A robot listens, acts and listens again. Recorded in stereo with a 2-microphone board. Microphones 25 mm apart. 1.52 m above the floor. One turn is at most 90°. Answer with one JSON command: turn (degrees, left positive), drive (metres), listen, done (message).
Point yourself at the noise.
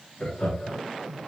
{"turn": 30}
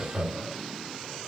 {"done": "Facing the laughter, 2 to 4 m away."}